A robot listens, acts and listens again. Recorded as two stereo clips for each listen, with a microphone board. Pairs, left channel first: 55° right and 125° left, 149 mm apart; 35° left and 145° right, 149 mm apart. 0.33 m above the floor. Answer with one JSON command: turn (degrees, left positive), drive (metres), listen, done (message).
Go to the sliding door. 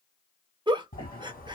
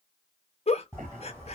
{"turn": -70}
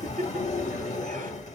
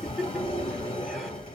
{"turn": -15}
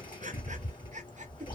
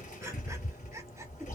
{"drive": 1.0}
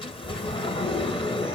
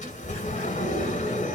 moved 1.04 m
{"drive": 1.0}
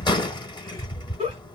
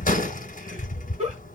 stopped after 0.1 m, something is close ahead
{"done": "Arrived at the sliding door, straight ahead."}